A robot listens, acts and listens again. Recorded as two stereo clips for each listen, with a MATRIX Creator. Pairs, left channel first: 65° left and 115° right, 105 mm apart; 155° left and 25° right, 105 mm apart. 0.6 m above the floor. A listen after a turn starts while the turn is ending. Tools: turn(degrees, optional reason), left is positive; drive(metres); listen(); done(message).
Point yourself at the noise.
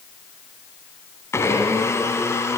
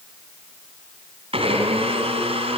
done("Found it: a blender, straight ahead.")